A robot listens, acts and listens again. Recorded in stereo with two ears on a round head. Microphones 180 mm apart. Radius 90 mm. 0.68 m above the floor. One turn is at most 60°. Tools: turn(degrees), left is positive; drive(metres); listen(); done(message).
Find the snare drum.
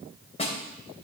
turn(degrees=35)
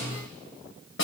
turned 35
turn(degrees=60)
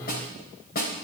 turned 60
turn(degrees=50)
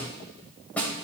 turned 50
turn(degrees=10)
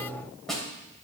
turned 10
done("Facing the snare drum, 2 to 4 m away.")